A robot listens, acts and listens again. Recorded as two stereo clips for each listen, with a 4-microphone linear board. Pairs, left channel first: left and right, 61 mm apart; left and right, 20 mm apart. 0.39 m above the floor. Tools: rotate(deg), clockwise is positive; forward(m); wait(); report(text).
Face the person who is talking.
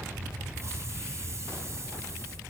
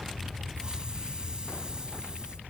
wait()
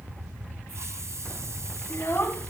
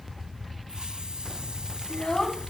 rotate(-35)
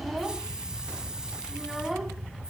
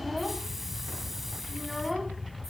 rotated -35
wait()
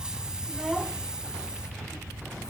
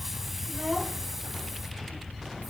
wait()
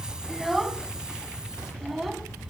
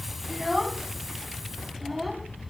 report("Facing the child speaking, 2 to 4 m away.")